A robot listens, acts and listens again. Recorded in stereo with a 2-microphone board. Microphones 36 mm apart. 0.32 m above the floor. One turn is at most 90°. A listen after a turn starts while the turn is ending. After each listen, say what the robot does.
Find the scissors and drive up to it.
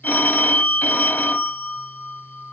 Keep listening.
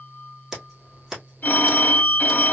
Turn 30° right.
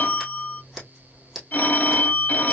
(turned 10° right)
Turn 30° left.
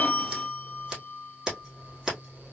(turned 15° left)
Turn 15° right.
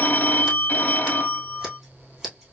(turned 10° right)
Drive 1.0 m forward.
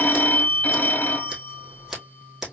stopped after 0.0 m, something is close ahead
Turn 10° right.
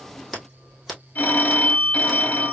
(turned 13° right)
Something is in my way. I am facing the scissors but have not reached it.